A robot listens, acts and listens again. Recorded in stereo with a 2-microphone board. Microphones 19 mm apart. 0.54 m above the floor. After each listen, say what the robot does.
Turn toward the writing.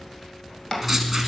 Turn 30° right.
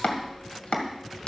Keep listening.
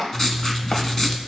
Turn 25° left.
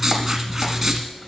Turn 10° right.
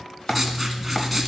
Facing the writing, 1 to 2 m away.